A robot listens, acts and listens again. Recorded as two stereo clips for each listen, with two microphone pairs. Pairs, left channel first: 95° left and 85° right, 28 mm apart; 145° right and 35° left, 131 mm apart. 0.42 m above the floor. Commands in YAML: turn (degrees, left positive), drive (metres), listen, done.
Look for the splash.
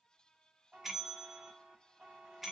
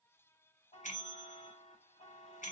listen: true
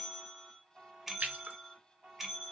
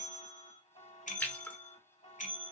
turn: -65
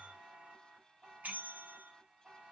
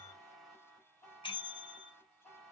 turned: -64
done: "Facing where the splash came from. I can't hear it now."